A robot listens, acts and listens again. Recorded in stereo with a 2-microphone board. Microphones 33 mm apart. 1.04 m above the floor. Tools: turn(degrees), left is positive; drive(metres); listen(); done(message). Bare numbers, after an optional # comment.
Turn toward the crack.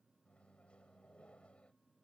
listen()
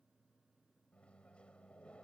listen()
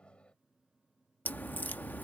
# The crack: about 65° left or 115° left.
turn(65)
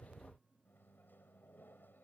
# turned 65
listen()
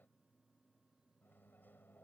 done("I heard a crack, but can't make it out now. It was about straight ahead or 50° left.")